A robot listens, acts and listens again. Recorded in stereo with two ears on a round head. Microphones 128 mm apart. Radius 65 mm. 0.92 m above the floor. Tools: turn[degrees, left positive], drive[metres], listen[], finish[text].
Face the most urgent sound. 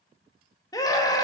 Thought: The scream: about 25° left or 155° left.
Action: turn[25]
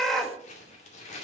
Action: finish[Facing the scream, 1 to 2 m away.]